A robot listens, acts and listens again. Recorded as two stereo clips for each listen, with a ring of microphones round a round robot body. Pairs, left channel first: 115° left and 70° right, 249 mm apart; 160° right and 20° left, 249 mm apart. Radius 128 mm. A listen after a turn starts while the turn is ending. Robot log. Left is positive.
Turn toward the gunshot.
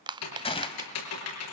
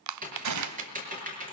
note: The gunshot: 45° left.
cmd yaw +45
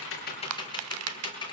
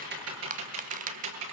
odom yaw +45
end: I heard a gunshot from this way, but can't make it out now.